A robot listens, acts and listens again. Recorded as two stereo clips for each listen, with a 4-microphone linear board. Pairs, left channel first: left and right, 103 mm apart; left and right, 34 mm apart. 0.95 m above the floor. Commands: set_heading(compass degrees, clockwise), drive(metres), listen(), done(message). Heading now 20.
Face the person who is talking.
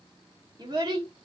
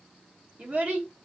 set_heading(60)
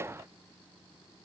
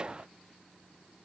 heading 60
listen()
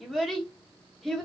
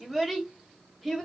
done("Found it: a child speaking, straight ahead, 1 to 2 m away.")